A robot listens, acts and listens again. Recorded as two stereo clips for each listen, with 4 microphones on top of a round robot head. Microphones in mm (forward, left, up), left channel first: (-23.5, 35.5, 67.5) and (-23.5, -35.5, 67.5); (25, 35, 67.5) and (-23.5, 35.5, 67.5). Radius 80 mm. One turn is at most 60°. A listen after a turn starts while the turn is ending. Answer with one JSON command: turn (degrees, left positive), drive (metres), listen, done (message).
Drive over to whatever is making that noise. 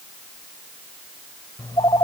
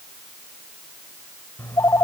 {"turn": 35}
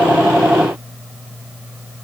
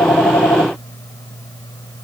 {"turn": -10}
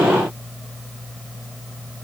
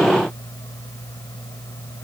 {"drive": 1.0}
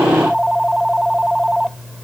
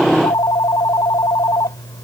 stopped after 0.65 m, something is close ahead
{"done": "Blocked. The phone ringing is further on, straight ahead."}